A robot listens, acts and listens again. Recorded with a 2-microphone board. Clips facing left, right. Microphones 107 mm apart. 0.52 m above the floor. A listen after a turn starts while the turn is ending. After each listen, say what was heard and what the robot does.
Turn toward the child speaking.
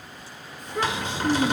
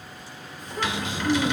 Turn 90° left.
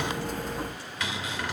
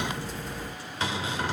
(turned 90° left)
Keep listening.
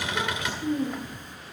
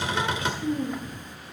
The child speaking is now 10° left. Turn 10° left.
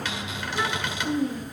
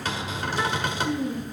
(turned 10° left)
Facing the child speaking, over 4 m away.